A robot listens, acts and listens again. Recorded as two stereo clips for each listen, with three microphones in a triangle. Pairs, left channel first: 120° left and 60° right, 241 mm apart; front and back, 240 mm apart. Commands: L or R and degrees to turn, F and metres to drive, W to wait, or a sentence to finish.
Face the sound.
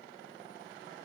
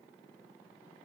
W
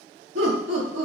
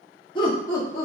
R70
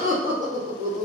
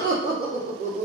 R40
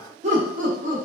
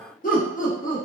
R35
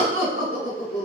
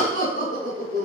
R30
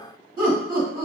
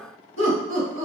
L10
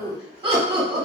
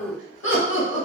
Found it: laughter, straight ahead, 1 to 2 m away.